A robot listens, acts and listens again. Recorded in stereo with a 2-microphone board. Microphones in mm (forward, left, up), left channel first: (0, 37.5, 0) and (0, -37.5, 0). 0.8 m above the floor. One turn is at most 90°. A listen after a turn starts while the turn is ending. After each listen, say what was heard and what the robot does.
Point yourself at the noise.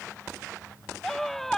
Turn 30° left.
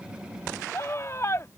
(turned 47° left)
So it is at 130° left. Turn 90° left.
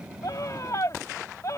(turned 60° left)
The scream is now 70° left. Turn 70° left.
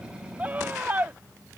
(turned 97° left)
The scream is now 30° right. Turn 30° right.
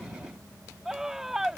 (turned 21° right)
Found it: a scream, straight ahead.